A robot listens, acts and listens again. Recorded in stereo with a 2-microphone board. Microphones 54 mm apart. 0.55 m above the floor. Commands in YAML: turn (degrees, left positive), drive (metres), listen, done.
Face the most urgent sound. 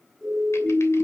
turn: -30
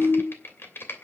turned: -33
turn: 20
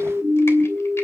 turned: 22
done: "Found it: a siren, straight ahead."